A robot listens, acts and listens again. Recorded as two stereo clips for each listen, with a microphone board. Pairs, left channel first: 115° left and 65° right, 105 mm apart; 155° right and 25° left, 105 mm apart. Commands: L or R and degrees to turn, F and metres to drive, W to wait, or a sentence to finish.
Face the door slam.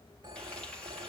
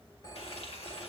W
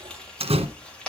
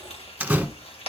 R55
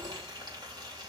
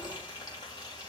Facing where the door slam came from. I can't hear it now.